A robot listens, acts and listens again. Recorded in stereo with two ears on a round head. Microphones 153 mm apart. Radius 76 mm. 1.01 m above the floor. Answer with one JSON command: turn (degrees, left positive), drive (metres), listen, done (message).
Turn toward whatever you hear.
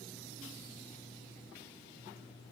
{"listen": true}
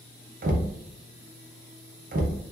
{"turn": -50}
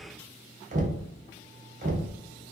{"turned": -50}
{"turn": -60}
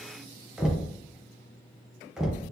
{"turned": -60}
{"done": "Found it: knocking, straight ahead, under 1 m away."}